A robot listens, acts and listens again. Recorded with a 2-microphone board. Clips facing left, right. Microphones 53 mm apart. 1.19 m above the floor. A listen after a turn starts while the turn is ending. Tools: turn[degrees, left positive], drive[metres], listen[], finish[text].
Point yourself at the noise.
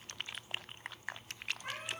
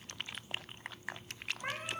Thought: The cat meowing: about 45° right or 135° right.
Action: turn[-45]
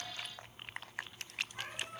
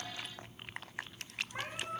Thought: So it is at 85° right.
Action: turn[-85]
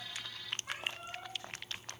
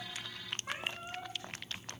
Thought: The cat meowing is now 25° right.
Action: turn[-25]
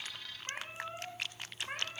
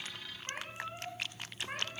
Action: finish[Facing the cat meowing.]